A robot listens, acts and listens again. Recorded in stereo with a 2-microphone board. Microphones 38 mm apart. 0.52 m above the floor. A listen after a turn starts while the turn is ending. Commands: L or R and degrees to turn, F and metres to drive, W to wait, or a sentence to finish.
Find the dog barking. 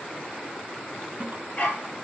L40
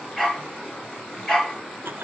L10
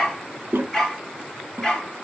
L10
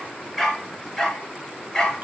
L10
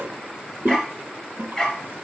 L10
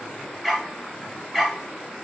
Found it: a dog barking, straight ahead.